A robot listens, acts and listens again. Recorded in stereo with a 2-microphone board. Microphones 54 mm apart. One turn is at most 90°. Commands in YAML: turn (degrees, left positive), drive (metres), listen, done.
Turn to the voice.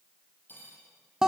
listen: true
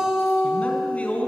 turn: 25
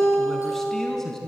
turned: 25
turn: 10
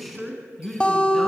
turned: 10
done: "Found it: a man speaking, straight ahead."